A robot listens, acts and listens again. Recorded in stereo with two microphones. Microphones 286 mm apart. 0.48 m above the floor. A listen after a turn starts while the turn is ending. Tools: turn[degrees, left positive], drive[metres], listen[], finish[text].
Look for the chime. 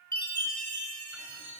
Thought: The chime: about 75° left or 105° left.
Action: turn[75]
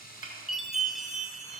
Action: finish[Facing the chime.]